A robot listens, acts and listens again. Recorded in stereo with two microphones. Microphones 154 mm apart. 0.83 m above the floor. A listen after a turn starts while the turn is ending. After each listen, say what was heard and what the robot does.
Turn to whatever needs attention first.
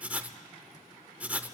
Keep listening.
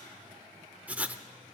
Keep listening.
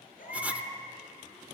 The baby crying: about 70° left or 110° left. Turn 70° left.
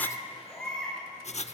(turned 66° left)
Found it: a baby crying, straight ahead, over 4 m away.